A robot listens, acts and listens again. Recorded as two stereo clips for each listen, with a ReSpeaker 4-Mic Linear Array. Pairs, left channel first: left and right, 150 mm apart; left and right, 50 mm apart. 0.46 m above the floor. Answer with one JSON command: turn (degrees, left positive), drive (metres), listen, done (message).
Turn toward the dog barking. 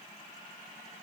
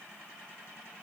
{"listen": true}
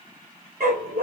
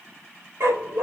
{"turn": -65}
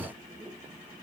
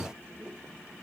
{"listen": true}
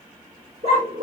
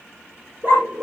{"turn": -45}
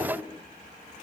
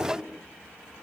{"listen": true}
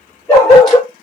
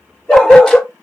{"done": "Facing the dog barking."}